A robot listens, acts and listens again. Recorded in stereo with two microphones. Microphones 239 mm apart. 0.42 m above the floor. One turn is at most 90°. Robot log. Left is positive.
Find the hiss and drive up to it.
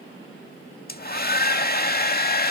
cmd idle
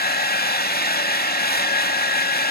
cmd idle
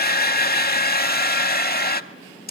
end: I can't make out a hiss to turn to.